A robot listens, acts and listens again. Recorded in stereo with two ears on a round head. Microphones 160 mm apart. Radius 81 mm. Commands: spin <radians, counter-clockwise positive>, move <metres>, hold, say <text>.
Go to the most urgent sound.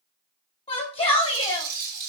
spin 0.61
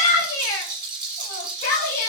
spin 1.92
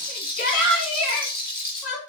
spin 0.87
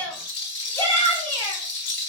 spin 0.26
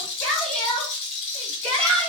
move 1.0
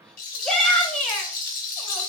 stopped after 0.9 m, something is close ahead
say Arrived at the shout, straight ahead.